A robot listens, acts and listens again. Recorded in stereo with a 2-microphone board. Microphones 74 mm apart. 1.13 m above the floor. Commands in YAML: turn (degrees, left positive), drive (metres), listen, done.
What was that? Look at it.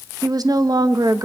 turn: -60
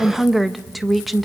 done: "Found it: a woman speaking, straight ahead, under 1 m away."